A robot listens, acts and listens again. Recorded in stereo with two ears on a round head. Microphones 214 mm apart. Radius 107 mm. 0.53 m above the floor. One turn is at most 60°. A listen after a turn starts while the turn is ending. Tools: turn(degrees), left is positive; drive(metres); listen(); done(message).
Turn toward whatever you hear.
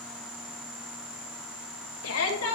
turn(degrees=60)
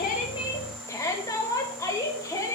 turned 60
turn(degrees=15)
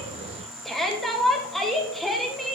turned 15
done("Found it: a shout, straight ahead, 2 to 4 m away.")